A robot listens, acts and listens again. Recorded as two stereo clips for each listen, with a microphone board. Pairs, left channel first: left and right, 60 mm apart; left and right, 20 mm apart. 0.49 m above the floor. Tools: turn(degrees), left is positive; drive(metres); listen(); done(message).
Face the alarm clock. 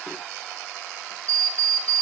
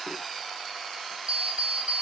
turn(degrees=-50)
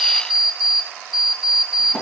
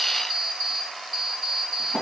done("Found it: an alarm clock, straight ahead, 2 to 4 m away.")